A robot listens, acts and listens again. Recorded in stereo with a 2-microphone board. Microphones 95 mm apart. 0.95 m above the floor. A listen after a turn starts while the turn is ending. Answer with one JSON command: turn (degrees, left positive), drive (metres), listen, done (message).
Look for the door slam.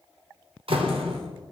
{"turn": -70}
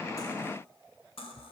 {"listen": true}
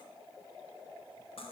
{"done": "I heard a door slam, but can't make it out now. It was about straight ahead or 40° right."}